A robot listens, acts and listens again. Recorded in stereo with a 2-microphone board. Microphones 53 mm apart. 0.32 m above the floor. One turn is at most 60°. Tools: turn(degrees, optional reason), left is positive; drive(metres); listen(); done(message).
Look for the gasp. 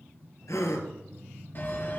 turn(degrees=60, reason="The gasp: about 70° left or 110° left.")
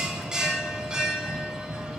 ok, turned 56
listen()
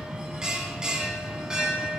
done("I heard a gasp, but can't make it out now. It was about 15° left or 55° left.")